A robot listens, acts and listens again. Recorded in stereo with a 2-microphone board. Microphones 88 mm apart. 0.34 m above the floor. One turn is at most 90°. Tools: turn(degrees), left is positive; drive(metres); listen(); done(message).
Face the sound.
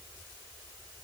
listen()
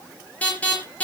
turn(degrees=15)
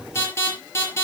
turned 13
turn(degrees=90)
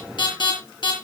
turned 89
turn(degrees=60)
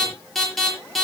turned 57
done("Found it: an alarm, straight ahead, over 4 m away.")